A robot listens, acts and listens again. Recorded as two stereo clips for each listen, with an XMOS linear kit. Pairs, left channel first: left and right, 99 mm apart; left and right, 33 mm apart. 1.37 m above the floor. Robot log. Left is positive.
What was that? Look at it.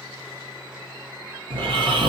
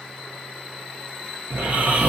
note: The snoring: about 55° right or 125° right.
cmd yaw -55
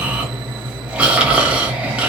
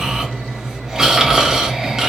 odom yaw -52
note: So it is at 10° right.
cmd yaw -10
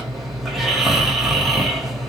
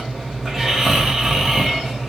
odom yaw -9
end: Facing the snoring, 1 to 2 m away.